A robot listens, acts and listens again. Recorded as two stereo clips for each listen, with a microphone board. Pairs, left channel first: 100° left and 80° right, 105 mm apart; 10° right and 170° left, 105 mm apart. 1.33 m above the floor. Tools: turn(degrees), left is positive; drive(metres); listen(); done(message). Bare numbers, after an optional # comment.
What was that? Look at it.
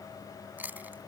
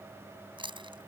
# The chewing: 150° right.
turn(-150)
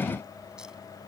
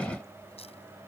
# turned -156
listen()
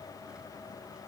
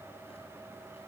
listen()
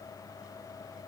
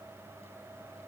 done("I heard chewing from this way, but can't make it out now.")